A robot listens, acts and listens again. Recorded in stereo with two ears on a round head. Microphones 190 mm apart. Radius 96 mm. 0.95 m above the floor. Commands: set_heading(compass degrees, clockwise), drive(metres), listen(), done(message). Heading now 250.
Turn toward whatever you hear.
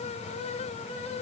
listen()
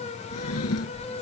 set_heading(160)
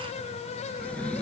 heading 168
done("Facing the drawer.")